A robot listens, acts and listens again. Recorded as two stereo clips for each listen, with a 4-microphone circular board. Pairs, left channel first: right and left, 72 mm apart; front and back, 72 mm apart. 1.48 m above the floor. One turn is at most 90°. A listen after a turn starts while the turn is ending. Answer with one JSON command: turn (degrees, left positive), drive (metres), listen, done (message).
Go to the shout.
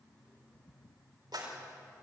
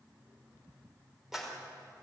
{"listen": true}
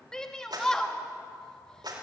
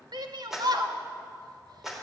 {"turn": -90}
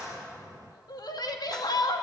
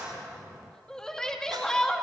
{"turn": -80}
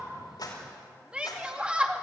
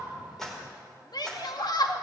{"turn": 15}
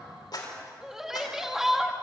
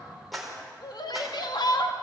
{"drive": 1.0}
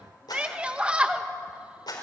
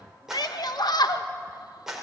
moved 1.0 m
{"turn": 15}
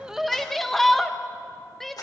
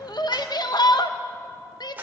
{"drive": 1.0}
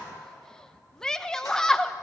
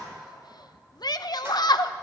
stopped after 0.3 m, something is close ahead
{"turn": -10}
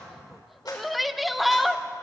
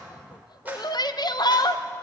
{"done": "Arrived at the shout, straight ahead."}